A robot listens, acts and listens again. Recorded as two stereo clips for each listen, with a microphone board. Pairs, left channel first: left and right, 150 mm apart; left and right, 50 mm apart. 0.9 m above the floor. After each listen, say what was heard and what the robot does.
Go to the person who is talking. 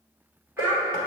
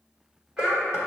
Turn 30° right.
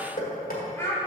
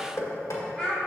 So it is at 15° left. Turn 15° left.
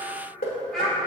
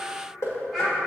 Drive 1.0 m forward.
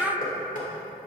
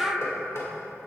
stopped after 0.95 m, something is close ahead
Arrived at the child speaking, straight ahead.